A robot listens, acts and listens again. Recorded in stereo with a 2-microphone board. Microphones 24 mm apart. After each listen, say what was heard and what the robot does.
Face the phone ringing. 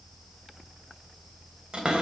Keep listening.
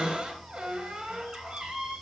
Keep listening.
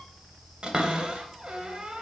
I can't make out a phone ringing to turn to.